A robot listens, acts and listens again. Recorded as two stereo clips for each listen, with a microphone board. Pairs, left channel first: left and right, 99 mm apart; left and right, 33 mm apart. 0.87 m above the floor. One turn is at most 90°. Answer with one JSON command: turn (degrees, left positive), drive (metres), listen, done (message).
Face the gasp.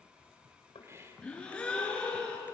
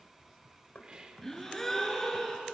{"turn": 30}
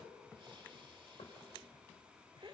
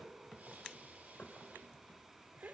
{"listen": true}
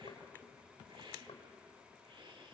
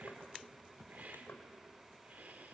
{"done": "I heard a gasp, but can't make it out now. It was about 20° right or 140° left."}